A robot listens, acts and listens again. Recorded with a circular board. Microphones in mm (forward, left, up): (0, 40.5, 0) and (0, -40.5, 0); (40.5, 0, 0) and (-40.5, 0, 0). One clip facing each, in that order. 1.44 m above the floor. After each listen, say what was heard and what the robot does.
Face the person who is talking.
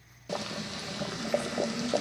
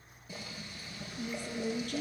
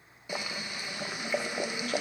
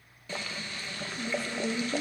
The woman speaking: 125° right. Turn 125° right.
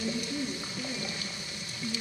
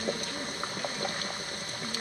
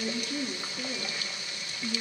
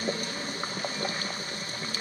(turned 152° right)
The woman speaking is now 10° left. Turn 10° left.
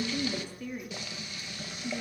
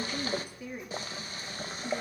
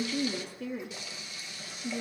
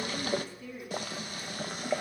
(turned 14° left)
The woman speaking is now 20° right. Turn 20° right.
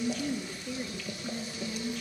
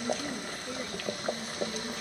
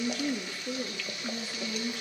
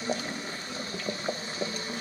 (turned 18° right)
Found it: a woman speaking, straight ahead.